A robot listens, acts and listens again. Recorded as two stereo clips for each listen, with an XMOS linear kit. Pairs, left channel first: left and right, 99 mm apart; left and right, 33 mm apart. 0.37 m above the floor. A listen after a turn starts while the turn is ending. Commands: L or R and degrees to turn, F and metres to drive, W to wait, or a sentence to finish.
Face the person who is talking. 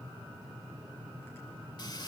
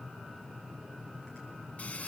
W
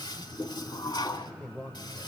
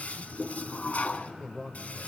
L15
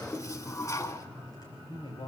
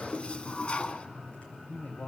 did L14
L120
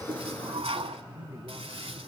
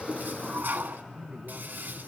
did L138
R15
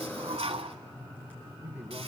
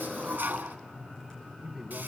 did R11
R20
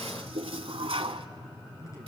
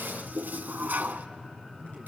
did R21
Facing the man speaking, 2 to 4 m away.